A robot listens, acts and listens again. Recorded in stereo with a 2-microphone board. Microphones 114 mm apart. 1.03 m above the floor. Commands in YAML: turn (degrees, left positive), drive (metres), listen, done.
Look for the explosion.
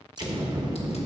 turn: -40
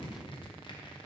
listen: true
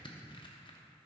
done: "I heard an explosion, but can't make it out now. It was about straight ahead or 100° right."